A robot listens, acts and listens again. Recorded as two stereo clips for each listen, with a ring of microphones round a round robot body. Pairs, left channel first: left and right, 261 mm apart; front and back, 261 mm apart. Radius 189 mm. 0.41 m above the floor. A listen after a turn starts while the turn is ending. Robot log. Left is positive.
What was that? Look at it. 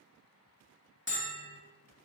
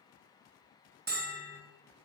note: The bell: 130° left.
cmd yaw +130
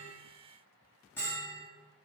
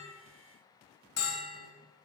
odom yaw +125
end: Found it: a bell, straight ahead.